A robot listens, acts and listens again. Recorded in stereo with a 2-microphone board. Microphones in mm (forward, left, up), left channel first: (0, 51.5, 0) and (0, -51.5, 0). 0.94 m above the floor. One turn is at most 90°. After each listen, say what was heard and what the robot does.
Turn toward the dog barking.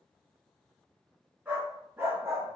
The dog barking: about 25° right or 155° right. Turn 25° right.
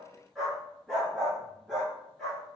Facing the dog barking.